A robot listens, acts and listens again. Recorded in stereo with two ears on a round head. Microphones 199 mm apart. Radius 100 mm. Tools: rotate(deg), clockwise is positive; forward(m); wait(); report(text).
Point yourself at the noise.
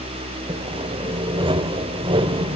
rotate(25)
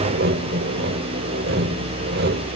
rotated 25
rotate(130)
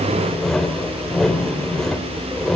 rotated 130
report("Found it: sawing, straight ahead.")